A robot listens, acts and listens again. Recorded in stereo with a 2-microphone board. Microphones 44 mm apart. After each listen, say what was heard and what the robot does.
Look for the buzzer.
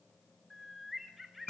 Keep listening.
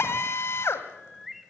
Keep listening.
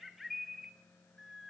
I can't make out a buzzer to turn to.